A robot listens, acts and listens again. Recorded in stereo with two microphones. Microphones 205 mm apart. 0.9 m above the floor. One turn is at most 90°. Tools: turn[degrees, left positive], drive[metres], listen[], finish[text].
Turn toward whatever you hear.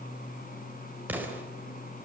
Action: turn[-30]
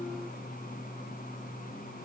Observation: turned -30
Action: listen[]
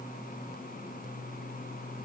Action: finish[I heard an explosion, but can't make it out now. It was about 20° left or 140° right.]